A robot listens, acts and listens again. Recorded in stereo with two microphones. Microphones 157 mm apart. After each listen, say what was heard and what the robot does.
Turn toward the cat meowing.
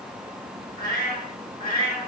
The cat meowing: about 65° left or 115° left. Turn 65° left.
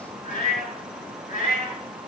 So it is at 55° left. Turn 55° left.
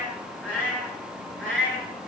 Facing the cat meowing.